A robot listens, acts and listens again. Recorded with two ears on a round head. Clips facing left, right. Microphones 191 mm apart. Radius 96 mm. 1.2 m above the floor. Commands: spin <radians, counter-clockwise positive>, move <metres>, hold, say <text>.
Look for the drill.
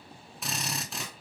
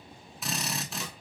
spin 0.52
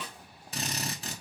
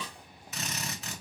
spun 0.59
spin 2.53
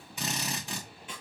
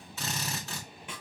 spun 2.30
spin 0.26
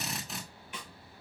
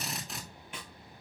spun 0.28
say Facing the drill, 1 to 2 m away.